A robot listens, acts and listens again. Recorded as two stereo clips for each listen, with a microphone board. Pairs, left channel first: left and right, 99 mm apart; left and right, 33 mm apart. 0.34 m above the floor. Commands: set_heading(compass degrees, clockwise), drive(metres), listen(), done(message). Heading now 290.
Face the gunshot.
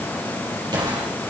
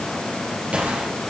set_heading(335)
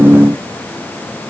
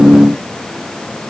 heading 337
listen()
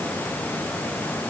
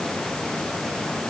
done("I heard a gunshot, but can't make it out now. It was about straight ahead or 85° right.")